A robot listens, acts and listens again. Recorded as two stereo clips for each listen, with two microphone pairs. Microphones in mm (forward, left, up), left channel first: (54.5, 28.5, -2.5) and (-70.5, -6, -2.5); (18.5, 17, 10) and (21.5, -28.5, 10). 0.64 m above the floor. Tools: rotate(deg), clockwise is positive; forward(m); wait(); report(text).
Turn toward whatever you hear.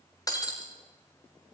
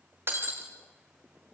rotate(45)
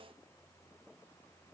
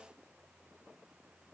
report("Facing where the breaking glass came from. I can't hear it now.")